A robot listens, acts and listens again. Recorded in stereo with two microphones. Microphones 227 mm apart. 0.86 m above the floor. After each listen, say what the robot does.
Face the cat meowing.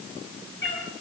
Turn 55° left.
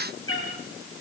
Turn 70° left.
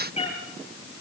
Turn 30° left.
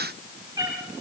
Turn 15° right.
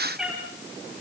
Found it: a cat meowing, straight ahead.